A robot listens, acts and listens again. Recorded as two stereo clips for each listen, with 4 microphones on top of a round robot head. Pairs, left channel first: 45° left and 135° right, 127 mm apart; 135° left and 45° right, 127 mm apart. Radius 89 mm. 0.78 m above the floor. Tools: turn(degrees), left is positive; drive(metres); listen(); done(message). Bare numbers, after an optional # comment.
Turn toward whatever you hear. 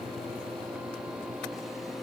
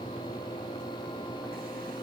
listen()
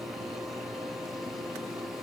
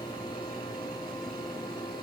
listen()
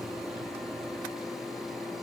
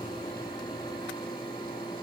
done("I can't make out anything.")